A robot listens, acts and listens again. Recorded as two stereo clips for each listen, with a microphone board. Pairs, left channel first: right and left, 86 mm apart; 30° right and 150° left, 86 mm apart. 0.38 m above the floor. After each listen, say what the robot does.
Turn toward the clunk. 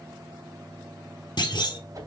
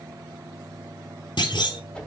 Turn 55° right.
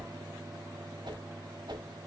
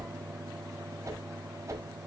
Facing where the clunk came from. I can't hear it now.